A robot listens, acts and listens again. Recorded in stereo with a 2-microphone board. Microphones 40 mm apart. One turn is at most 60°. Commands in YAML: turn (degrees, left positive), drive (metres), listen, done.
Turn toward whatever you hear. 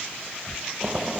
turn: -20
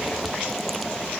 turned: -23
done: "Found it: boiling, straight ahead."